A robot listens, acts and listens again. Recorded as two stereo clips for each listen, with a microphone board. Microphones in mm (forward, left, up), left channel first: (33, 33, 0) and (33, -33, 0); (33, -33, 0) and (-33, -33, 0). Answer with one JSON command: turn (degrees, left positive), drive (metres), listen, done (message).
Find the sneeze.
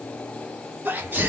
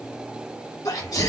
{"turn": -25}
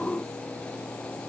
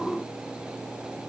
{"done": "I heard a sneeze from this way, but can't make it out now."}